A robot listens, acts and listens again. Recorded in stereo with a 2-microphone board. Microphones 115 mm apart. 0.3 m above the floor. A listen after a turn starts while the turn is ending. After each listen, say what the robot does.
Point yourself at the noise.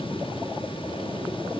Keep listening.
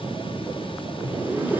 Turn 15° right.
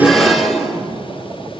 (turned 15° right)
Found it: a zipper, straight ahead.